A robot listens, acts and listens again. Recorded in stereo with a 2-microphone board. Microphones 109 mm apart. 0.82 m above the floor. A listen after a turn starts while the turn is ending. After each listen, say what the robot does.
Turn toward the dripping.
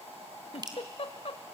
Turn 40° right.
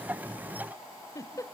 Keep listening.
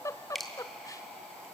Facing the dripping, 2 to 4 m away.